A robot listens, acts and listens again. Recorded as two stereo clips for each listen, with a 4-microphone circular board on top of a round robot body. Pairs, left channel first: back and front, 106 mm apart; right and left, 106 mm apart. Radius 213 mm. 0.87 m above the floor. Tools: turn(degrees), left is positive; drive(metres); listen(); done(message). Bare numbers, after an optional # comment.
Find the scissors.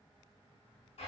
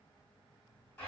listen()
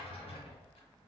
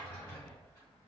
listen()
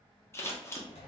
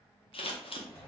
# The scissors: 115° right.
turn(-115)
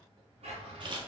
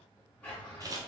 # The scissors is now 35° left.
turn(35)
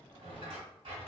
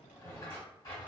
listen()
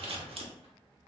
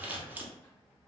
# The scissors is now 20° left.
turn(20)
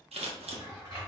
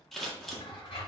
done("Facing the scissors, under 1 m away.")